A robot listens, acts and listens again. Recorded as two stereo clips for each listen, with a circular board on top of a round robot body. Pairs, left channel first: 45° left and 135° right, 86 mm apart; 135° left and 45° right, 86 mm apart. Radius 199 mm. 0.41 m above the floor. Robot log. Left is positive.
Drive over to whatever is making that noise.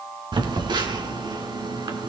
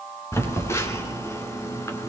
note: The phone buzzing: 165° right.
cmd yaw -165
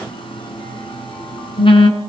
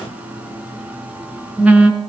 note: The phone buzzing is now 30° left.
cmd yaw +30
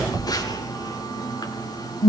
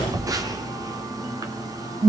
cmd fwd 1.0
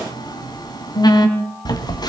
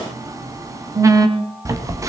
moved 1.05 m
note: The phone buzzing is now 10° left.
cmd yaw +10
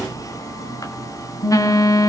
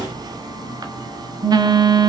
cmd fwd 1.0
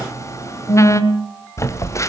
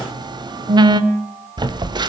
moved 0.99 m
note: The phone buzzing is now 10° right.
cmd yaw -10
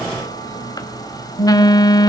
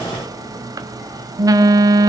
cmd fwd 1.0
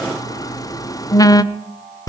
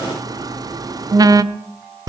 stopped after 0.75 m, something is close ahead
end: I am next to the phone buzzing.